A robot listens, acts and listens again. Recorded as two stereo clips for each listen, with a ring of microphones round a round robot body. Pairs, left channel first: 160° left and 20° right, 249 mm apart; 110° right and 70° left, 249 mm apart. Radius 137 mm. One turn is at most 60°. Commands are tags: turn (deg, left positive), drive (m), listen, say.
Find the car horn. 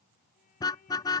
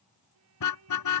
<turn deg="-60"/>
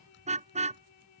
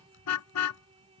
<turn deg="-60"/>
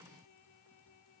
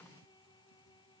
<turn deg="-25"/>
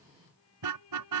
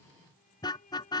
<turn deg="-35"/>
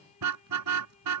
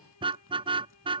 <say>Facing the car horn.</say>